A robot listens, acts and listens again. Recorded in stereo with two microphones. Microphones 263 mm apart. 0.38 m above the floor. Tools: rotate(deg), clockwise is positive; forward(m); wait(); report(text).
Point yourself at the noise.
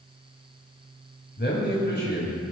rotate(-40)
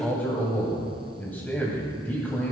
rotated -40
report("Found it: a man speaking, straight ahead.")